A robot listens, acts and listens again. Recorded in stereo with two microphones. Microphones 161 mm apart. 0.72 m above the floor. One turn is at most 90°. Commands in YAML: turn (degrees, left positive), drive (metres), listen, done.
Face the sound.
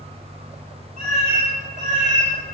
turn: -50
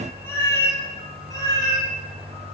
turn: 25
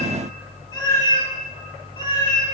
turn: 30
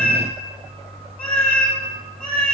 turn: 10
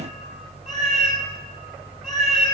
done: "Found it: a cat meowing, straight ahead."